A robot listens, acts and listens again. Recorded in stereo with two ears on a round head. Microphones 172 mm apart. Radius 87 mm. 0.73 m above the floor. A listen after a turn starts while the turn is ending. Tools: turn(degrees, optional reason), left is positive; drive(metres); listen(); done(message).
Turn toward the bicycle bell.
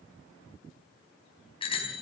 turn(degrees=30, reason="The bicycle bell: about 30° left or 150° left.")
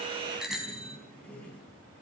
done("Found it: a bicycle bell, straight ahead.")